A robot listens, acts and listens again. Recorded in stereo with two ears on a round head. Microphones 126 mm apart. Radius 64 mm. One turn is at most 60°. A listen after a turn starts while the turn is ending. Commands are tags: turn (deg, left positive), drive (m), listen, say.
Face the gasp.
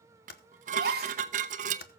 <turn deg="-60"/>
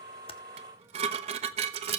<listen/>
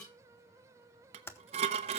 <say>I heard a gasp, but can't make it out now. It was about 10° right or 50° right.</say>